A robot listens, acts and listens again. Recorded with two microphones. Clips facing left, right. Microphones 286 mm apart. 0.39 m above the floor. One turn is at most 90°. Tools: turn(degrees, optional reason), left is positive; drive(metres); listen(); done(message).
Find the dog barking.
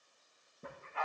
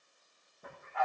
turn(degrees=30, reason="The dog barking: about 30° left or 150° left.")
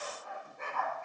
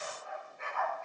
turn(degrees=90, reason="So it is at 125° left.")
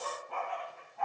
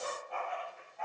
turn(degrees=75, reason="The dog barking is now 75° left.")
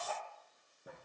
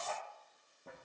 turn(degrees=15, reason="The dog barking is now 15° left.")
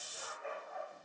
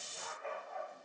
done("Found it: a dog barking, straight ahead, over 4 m away.")